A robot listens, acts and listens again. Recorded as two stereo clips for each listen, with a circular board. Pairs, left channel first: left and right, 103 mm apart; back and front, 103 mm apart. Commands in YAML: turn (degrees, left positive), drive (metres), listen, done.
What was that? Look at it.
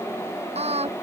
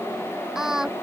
turn: -85
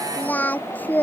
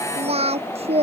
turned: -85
turn: 15
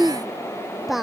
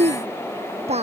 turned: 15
done: "Facing the singing."